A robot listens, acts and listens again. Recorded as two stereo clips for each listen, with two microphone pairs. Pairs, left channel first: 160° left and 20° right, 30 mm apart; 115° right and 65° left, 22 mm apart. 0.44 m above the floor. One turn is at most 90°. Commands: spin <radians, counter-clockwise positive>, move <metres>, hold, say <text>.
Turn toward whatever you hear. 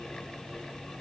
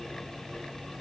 hold
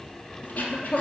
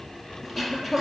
spin 1.57
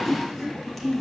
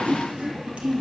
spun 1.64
spin 1.22
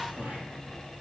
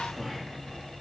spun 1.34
say Facing the throat clearing.